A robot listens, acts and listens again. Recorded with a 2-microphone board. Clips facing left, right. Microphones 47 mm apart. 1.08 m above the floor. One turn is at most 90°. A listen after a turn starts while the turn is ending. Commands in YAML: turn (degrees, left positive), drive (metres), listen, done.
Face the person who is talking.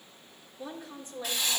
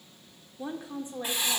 turn: -25
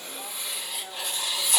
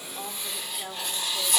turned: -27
turn: -90
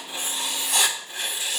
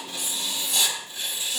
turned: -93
turn: -25
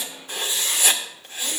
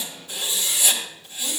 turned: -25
listen: true
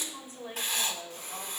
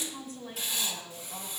turn: 30
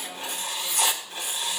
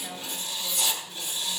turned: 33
listen: true
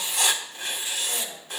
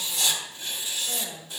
done: "Facing the woman speaking, 2 to 4 m away."